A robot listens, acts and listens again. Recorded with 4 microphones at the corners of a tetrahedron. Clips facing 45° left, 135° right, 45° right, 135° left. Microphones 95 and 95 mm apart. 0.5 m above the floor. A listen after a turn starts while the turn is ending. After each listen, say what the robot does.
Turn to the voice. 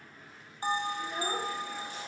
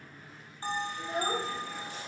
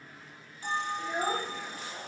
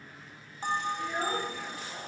Turn 115° right.
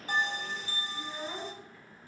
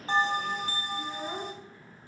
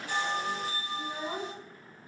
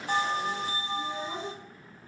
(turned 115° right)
Turn 70° right.
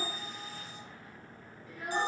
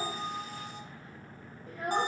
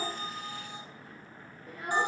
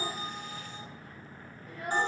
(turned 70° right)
Turn 95° right.
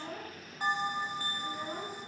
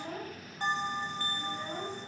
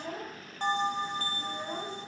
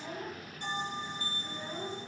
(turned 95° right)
Turn 15° right.
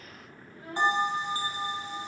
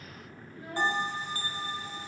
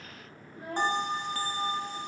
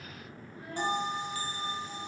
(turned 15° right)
Found it: a child speaking, straight ahead.